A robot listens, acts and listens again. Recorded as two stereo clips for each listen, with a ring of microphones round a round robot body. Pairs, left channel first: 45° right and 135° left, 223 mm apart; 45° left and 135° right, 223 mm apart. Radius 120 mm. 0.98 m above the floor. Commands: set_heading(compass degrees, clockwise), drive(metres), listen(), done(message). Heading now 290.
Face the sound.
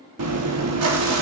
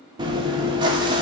set_heading(135)
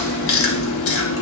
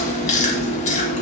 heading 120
set_heading(135)
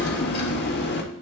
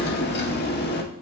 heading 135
done("Facing the chewing, 1 to 2 m away.")